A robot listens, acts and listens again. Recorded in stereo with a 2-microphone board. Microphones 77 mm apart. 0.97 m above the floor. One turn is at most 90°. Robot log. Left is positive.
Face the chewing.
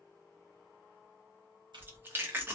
note: The chewing: about 25° right or 155° right.
cmd yaw -25
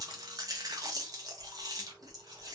note: So it is at 130° right.
cmd yaw -90
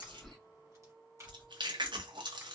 note: The chewing is now 85° right.
cmd yaw -85
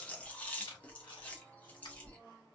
note: The chewing is now 15° left.
cmd yaw +15
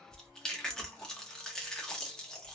end: Facing the chewing, under 1 m away.